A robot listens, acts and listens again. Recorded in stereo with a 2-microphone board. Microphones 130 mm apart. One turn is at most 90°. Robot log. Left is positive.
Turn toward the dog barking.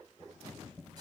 cmd idle
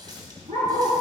cmd yaw -90
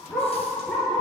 end: Found it: a dog barking, straight ahead, 2 to 4 m away.